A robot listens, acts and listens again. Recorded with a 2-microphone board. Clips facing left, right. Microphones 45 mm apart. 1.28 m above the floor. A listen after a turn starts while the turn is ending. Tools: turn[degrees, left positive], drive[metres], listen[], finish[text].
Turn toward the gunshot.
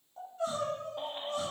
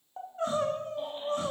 Action: listen[]
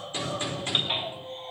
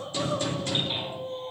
Thought: The gunshot: about 25° left or 155° left.
Action: turn[25]
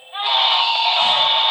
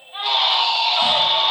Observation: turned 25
Action: listen[]
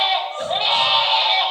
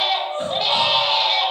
Action: finish[I heard a gunshot, but can't make it out now. It was about straight ahead or 130° left.]